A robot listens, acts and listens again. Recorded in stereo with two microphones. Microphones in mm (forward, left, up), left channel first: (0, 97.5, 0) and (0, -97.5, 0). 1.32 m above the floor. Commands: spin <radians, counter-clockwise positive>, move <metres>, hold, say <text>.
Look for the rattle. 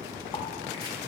hold
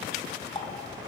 hold
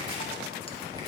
say I can't make out a rattle to turn to.